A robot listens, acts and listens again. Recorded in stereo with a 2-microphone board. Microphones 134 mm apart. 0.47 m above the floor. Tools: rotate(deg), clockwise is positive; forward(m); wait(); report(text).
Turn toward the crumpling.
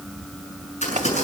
rotate(-55)
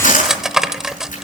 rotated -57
rotate(-65)
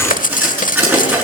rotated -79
rotate(15)
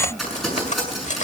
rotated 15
report("Found it: crumpling, straight ahead, over 4 m away.")